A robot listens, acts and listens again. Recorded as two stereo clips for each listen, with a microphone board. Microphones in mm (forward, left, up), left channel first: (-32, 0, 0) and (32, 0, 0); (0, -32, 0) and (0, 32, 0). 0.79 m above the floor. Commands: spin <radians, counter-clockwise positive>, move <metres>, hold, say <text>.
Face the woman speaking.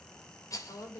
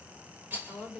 spin 3.14
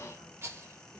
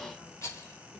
hold
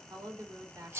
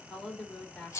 spin -0.26
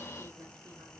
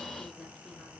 hold
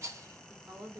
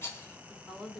say Facing the woman speaking, 2 to 4 m away.